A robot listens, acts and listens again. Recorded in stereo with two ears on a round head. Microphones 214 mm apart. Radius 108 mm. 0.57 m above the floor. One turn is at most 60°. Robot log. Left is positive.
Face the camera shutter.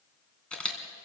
cmd yaw +30
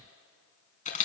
note: So it is at 145° left.
cmd yaw +60
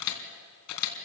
note: The camera shutter is now 95° left.
cmd yaw +60
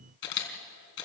note: The camera shutter is now 50° left.
cmd yaw +50
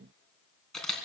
end: Facing the camera shutter.